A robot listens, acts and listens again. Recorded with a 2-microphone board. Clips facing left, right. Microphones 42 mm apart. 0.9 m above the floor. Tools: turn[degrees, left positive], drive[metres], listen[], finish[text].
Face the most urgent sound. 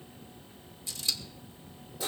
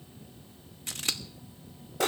Action: listen[]
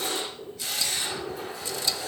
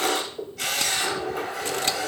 Action: listen[]
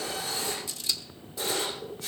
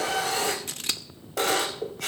Action: finish[I can't make out anything urgent to turn to.]